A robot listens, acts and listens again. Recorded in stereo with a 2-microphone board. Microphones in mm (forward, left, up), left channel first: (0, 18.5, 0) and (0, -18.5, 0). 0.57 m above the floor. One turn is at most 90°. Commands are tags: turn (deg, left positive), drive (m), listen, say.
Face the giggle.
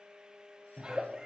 <turn deg="-25"/>
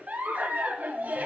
<turn deg="-90"/>
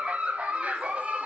<turn deg="-40"/>
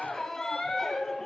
<turn deg="15"/>
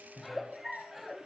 <say>Found it: a giggle, straight ahead.</say>